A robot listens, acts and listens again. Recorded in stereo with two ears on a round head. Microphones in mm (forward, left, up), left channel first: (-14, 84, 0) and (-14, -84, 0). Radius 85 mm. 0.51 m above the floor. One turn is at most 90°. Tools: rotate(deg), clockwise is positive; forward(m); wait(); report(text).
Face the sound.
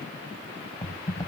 rotate(-20)
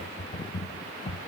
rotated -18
rotate(-90)
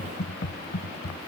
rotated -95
rotate(-45)
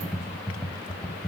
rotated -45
report("Facing the typing on a keyboard, under 1 m away.")